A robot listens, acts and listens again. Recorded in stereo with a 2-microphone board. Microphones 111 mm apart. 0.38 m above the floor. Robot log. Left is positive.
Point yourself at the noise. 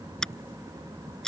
cmd yaw +30
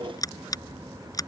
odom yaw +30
note: So it is at 145° left.
cmd yaw +145
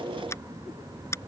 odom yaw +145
note: The scissors is now 25° left.
cmd yaw +25
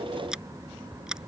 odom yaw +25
end: Found it: scissors, straight ahead.